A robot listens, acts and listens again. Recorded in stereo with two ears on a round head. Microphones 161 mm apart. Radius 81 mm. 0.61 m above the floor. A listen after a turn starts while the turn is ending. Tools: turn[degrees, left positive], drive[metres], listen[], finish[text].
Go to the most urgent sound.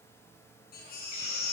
Thought: The baby crying: about 60° left or 120° left.
Action: turn[60]
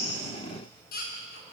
Thought: So it is at 55° left.
Action: turn[55]
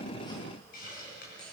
Action: listen[]
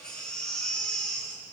Action: drive[1.0]
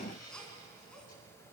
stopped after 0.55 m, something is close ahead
Action: finish[Something is in my way. I am facing the baby crying but have not reached it.]